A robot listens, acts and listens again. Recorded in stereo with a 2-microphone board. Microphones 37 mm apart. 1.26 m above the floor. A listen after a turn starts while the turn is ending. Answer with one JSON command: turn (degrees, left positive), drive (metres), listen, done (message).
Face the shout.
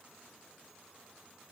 {"listen": true}
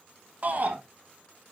{"turn": -45}
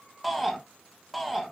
{"done": "Found it: a shout, straight ahead, 1 to 2 m away."}